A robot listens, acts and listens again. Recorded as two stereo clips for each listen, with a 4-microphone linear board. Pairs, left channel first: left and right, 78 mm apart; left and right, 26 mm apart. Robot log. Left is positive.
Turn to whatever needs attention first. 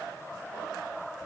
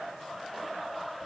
cmd idle
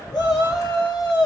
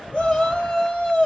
note: The shout: about 55° left or 125° left.
cmd yaw +55
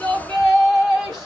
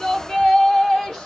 note: So it is at 10° left.
cmd yaw +10
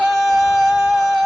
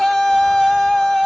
end: Facing the shout, 1 to 2 m away.